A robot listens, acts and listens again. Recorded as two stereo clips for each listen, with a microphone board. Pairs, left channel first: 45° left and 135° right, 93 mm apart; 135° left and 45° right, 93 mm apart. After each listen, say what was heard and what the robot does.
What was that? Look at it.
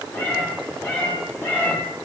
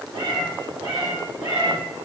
The cat meowing: 20° right. Turn 20° right.
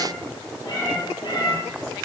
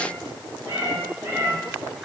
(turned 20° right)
The cat meowing is now 10° left. Turn 10° left.
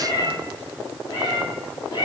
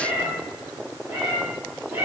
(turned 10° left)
The cat meowing is now 10° left. Turn 10° left.
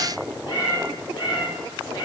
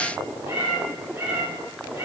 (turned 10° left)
Found it: a cat meowing, straight ahead.